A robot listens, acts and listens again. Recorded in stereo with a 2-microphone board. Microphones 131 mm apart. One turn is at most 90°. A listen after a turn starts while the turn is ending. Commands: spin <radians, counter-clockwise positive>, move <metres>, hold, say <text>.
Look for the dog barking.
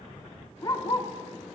spin 0.70
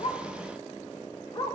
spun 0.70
spin 0.61
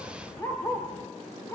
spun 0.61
spin 0.35
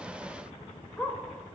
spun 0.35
say Facing the dog barking.